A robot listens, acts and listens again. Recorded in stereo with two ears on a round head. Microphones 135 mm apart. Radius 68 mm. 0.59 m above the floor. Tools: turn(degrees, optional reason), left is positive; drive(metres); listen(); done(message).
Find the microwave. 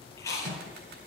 turn(degrees=-50, reason="The microwave: about 50° right or 130° right.")
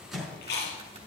done("Found it: a microwave, straight ahead.")